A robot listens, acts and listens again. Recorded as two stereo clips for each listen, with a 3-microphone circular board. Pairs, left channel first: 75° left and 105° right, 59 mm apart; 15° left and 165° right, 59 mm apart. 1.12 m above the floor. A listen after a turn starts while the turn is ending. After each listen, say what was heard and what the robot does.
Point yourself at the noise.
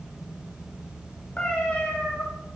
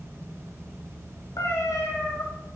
The cat meowing: 10° left. Turn 10° left.
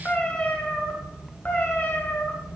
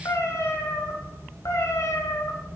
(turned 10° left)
The cat meowing is now 20° left. Turn 20° left.
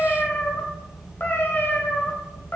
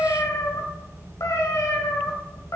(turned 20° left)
The cat meowing is now 25° left. Turn 25° left.
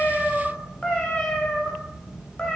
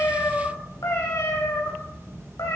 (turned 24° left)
Facing the cat meowing, 2 to 4 m away.